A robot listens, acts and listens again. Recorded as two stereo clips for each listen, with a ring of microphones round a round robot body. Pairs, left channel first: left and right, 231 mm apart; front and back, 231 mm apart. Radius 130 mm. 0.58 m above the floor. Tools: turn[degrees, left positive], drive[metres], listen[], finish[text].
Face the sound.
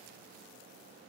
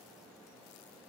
Action: listen[]
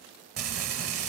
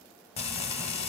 Thought: The frying: 65° right.
Action: turn[-65]
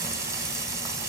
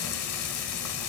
Thought: The frying is now 15° right.
Action: turn[-15]
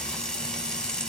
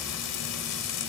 Action: finish[Facing the frying, under 1 m away.]